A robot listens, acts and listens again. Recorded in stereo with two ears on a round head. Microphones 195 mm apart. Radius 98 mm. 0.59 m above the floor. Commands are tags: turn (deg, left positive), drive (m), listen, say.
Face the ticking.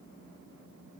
<listen/>
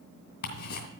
<turn deg="45"/>
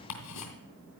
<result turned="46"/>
<turn deg="85"/>
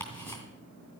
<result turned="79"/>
<turn deg="10"/>
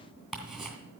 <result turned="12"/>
<say>Found it: ticking, straight ahead.</say>